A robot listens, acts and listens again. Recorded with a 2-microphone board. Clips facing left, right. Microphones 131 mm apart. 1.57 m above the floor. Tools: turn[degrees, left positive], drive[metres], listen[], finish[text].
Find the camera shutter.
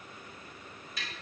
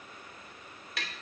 Action: listen[]
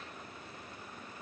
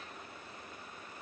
Action: listen[]
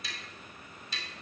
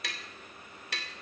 Action: finish[I can't make out a camera shutter, only tapping.]